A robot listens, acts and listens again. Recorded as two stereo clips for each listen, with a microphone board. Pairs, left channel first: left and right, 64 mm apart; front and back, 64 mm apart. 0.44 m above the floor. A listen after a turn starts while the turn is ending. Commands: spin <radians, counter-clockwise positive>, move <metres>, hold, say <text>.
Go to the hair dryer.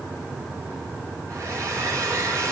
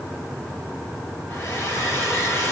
spin -0.87
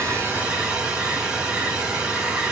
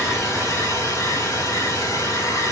spin -0.35
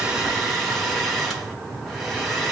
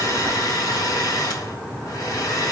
move 1.0
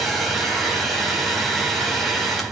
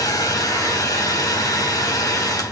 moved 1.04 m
move 1.0
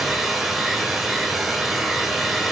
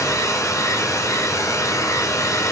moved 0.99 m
move 1.0
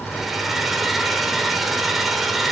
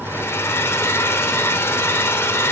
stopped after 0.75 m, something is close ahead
say I am next to the hair dryer.